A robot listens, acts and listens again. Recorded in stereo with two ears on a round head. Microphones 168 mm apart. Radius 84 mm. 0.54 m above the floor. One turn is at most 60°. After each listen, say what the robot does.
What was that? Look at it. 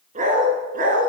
Turn 45° right.
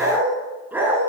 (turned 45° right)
Turn 10° right.
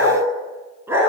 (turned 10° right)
Turn 15° right.
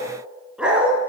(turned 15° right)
Facing the dog barking, 2 to 4 m away.